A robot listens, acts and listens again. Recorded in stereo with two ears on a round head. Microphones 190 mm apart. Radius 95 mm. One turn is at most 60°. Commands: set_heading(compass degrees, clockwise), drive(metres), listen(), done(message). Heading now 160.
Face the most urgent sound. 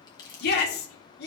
set_heading(110)
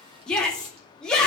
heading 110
done("Facing the shout.")